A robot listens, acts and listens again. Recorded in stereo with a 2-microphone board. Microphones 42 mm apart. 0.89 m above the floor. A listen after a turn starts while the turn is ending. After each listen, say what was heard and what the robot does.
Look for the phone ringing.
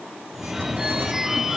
Turn 30° right.
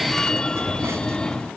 So it is at 20° left. Turn 20° left.
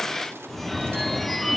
Found it: a phone ringing, straight ahead.